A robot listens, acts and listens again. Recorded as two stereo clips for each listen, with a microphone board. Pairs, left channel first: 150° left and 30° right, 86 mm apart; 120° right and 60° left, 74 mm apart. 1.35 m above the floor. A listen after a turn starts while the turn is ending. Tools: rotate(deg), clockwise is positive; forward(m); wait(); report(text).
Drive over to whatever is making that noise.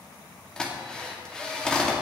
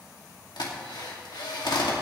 rotate(130)
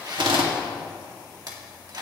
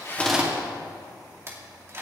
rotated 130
forward(1.0)
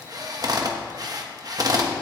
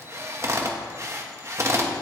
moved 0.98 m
rotate(-10)
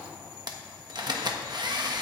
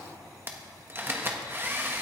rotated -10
forward(1.0)
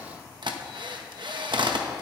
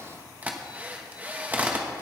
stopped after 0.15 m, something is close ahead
rotate(10)
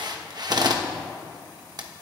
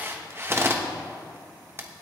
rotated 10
report("Arrived at the drill, straight ahead.")